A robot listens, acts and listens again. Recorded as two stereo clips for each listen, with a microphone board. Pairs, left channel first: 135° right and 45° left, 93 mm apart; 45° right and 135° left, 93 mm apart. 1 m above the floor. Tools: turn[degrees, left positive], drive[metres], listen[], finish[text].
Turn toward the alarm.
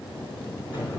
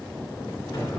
Action: listen[]
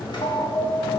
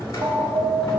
Thought: The alarm: 175° right.
Action: turn[-175]
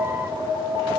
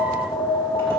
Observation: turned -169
Action: finish[Facing the alarm, under 1 m away.]